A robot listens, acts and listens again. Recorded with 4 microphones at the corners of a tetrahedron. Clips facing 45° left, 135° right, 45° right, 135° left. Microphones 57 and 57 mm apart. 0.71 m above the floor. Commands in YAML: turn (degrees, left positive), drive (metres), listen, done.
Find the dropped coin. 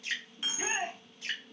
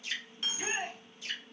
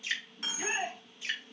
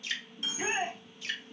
turn: -25
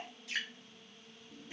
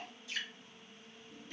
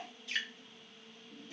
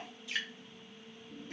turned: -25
done: "Facing where the dropped coin came from. I can't hear it now."